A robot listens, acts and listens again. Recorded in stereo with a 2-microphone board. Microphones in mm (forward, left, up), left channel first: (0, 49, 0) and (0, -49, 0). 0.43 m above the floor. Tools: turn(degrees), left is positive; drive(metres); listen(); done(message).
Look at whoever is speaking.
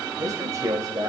turn(degrees=-35)
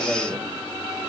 turn(degrees=-10)
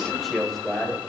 done("Found it: a man speaking, straight ahead, 2 to 4 m away.")